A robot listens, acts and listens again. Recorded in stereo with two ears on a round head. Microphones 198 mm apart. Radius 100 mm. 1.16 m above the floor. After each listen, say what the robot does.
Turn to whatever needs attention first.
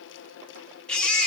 Turn 30° left.
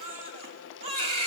Turn 25° right.
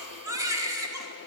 Turn 15° right.
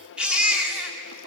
Facing the baby crying.